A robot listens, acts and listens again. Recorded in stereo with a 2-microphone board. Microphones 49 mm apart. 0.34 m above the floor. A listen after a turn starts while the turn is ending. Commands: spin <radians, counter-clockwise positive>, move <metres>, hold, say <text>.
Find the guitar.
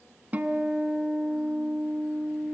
spin -0.61
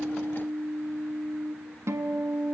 spin -1.92
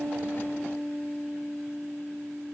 say Facing the guitar, 1 to 2 m away.